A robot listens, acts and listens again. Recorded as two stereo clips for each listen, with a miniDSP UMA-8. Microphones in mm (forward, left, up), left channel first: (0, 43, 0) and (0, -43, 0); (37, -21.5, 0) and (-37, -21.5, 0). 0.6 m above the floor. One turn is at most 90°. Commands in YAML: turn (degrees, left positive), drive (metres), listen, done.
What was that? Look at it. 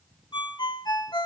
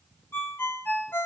turn: 60
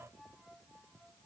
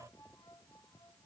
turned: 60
listen: true
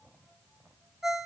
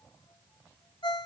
done: "Facing the ringtone, 1 to 2 m away."